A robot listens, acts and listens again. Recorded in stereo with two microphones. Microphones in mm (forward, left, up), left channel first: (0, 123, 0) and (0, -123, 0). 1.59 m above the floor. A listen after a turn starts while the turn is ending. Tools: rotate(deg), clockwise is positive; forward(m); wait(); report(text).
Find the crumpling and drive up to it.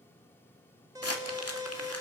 rotate(-70)
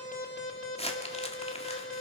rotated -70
rotate(-25)
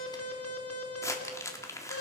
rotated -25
rotate(-15)
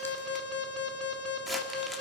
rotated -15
wait()
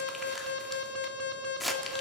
forward(1.0)
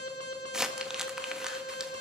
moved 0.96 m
forward(1.0)
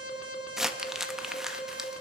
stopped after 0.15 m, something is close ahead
report("Arrived at the crumpling, straight ahead.")